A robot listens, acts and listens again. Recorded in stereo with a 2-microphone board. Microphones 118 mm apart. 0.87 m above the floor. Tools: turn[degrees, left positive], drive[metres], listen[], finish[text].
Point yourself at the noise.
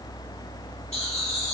Action: turn[90]
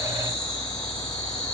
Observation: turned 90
Thought: So it is at 10° left.
Action: turn[10]
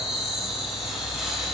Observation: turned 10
Action: finish[Facing the laughter.]